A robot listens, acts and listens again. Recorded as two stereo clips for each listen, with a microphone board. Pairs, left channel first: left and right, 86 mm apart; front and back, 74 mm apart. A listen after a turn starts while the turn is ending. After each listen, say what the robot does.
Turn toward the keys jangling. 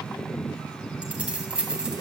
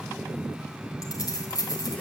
Turn 10° right.
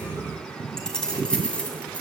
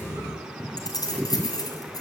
Turn 15° left.
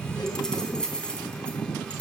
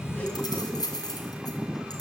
Turn 10° left.
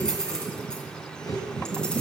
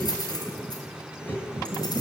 Turn 10° left.
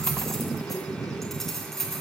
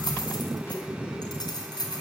Facing the keys jangling.